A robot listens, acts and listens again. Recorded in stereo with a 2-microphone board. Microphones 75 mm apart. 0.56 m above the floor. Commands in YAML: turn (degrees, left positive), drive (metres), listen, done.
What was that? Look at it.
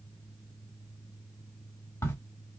turn: 40
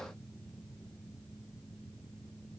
listen: true
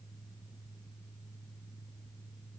done: "I heard a crack, but can't make it out now. It was about straight ahead or 100° left."